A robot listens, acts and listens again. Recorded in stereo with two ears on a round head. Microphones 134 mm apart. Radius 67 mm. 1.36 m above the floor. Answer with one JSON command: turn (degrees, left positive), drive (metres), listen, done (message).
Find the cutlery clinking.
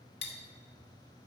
{"turn": 45}
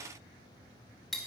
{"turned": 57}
{"done": "Found it: cutlery clinking, straight ahead, 1 to 2 m away."}